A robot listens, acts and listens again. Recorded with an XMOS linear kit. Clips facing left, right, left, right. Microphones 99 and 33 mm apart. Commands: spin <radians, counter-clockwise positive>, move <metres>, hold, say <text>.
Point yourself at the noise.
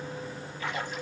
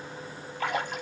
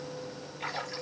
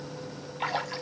spin -1.22
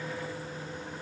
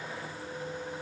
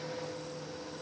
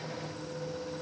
hold
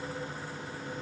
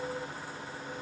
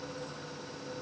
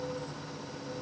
say I heard a splash, but can't make it out now. It was about straight ahead or 40° right.